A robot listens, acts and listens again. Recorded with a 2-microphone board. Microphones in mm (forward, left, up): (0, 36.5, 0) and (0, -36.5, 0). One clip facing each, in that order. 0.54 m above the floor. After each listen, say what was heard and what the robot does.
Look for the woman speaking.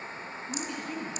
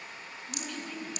The woman speaking: about 20° left or 160° left. Turn 20° left.
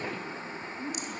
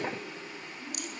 The woman speaking: about 35° left or 145° left. Turn 35° left.
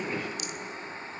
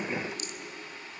Keep listening.
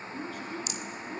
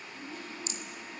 So it is at 120° left. Turn 120° left.
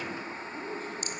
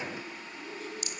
The woman speaking is now 40° left. Turn 40° left.
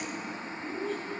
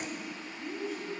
Found it: a woman speaking, straight ahead, over 4 m away.